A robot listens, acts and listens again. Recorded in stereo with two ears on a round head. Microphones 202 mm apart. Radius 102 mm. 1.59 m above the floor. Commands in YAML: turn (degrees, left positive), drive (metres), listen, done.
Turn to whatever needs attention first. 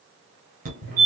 turn: -40
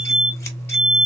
done: "Facing the fire alarm."